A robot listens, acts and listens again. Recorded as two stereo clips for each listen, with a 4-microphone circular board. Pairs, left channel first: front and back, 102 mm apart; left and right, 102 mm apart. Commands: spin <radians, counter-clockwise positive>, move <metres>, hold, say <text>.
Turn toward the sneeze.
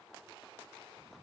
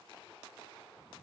hold
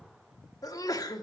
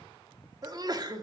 spin -0.79
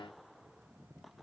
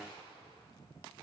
say I heard a sneeze from this way, but can't make it out now.